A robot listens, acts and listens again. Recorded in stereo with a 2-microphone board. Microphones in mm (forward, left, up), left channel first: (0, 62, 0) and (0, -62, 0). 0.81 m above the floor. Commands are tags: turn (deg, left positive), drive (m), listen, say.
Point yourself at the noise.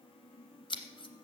<turn deg="40"/>
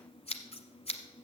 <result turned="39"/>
<turn deg="90"/>
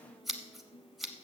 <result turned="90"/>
<say>Found it: scissors, straight ahead, 1 to 2 m away.</say>